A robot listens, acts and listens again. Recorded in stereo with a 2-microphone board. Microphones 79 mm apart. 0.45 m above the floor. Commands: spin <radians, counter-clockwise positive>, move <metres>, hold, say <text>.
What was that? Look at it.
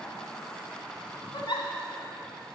spin 1.57
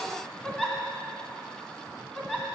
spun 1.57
spin 0.26
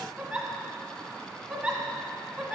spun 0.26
say Found it: a giggle, straight ahead.